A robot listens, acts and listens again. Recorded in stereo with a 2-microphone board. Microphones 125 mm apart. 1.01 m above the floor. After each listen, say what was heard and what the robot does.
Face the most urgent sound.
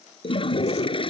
Keep listening.
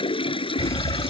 The fire alarm: about 25° left or 155° left. Turn 25° left.
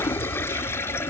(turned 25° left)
So it is at 130° left. Turn 130° left.
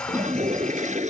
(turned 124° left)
Keep listening.
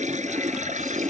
Keep listening.
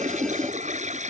I heard a fire alarm from this way, but can't make it out now.